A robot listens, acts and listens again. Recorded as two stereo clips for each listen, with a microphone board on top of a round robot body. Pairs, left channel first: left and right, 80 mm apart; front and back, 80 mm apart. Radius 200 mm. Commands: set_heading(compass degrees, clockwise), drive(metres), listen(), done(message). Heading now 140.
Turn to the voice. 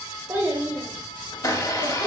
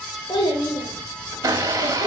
set_heading(165)
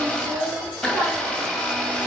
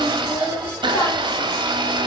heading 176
set_heading(196)
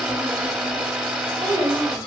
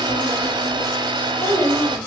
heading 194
set_heading(234)
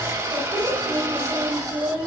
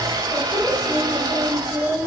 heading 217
set_heading(237)
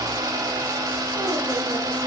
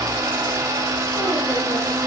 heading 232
listen()
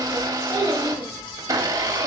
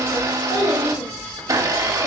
done("Facing the child speaking, 1 to 2 m away.")